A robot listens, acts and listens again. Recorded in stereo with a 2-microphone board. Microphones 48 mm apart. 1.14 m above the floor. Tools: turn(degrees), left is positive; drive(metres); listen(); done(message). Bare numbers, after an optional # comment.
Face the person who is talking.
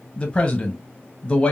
# The man speaking: about 25° left or 155° left.
turn(25)
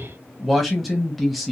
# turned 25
done("Facing the man speaking, under 1 m away.")